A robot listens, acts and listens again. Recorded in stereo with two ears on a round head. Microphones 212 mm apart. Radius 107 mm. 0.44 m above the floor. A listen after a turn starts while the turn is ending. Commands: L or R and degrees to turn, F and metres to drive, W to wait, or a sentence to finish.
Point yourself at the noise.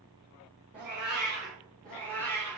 L30
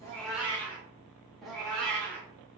L30
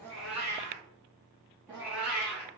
Facing the cat meowing.